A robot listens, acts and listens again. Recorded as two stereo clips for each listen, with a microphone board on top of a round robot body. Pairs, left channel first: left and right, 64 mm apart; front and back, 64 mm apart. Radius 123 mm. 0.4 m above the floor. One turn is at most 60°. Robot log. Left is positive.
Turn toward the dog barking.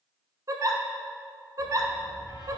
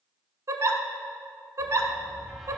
note: The dog barking: 95° right.
cmd yaw -60
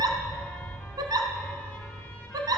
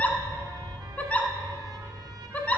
note: The dog barking is now 60° right.
cmd yaw -60
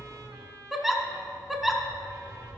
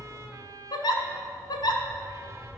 note: The dog barking is now 20° right.
cmd yaw -20
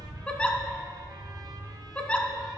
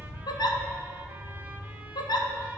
end: Found it: a dog barking, straight ahead.